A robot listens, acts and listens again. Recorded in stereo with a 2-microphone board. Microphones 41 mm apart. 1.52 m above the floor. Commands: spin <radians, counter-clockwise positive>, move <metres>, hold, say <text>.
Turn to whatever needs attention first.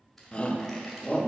spin 0.52
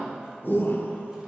spin 2.09
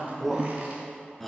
say Found it: a shout, straight ahead, under 1 m away.